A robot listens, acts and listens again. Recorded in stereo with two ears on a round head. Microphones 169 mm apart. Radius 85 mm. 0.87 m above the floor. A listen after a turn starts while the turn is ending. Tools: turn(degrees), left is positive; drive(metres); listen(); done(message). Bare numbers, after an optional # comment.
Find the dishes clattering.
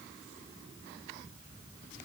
listen()
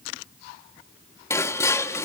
# The dishes clattering: about 15° left or 165° left.
turn(15)
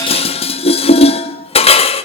# So it is at 145° left.
turn(145)
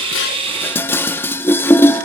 # The dishes clattering is now 10° left.
turn(10)
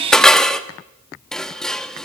done("Found it: dishes clattering, straight ahead.")